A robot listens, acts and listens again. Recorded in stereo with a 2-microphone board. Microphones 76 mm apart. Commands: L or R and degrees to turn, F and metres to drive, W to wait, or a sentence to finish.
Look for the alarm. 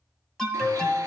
L30
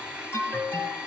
L140
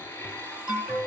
R20
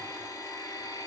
W
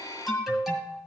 Facing the alarm, 2 to 4 m away.